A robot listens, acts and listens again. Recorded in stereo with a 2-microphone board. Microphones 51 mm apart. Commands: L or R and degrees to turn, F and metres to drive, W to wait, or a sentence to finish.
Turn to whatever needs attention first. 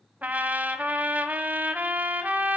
W
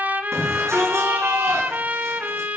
R70
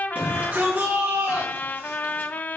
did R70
R40
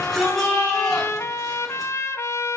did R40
Found it: a shout, straight ahead, over 4 m away.